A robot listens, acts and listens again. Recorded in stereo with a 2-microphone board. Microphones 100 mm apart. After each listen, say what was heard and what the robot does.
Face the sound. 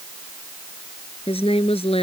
Turn 90° left.
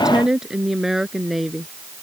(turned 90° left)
Facing the woman speaking.